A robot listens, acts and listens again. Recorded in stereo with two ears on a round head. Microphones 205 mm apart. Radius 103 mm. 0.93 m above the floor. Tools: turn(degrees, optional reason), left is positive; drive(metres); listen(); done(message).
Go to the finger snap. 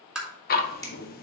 turn(degrees=15, reason="The finger snap: about 15° left or 165° left.")
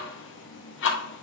listen()
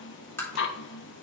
listen()
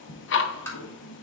done("I heard a finger snap, but can't make it out now. It was about straight ahead or 150° left. I did not reach it.")